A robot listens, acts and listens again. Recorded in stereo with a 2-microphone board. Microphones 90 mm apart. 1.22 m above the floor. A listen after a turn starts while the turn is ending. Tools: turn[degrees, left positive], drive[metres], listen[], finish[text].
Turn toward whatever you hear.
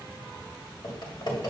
Thought: The typing on a keyboard: about 55° left or 125° left.
Action: turn[55]
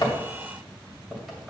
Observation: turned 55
Action: listen[]
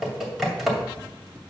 Action: finish[Found it: typing on a keyboard, straight ahead, 2 to 4 m away.]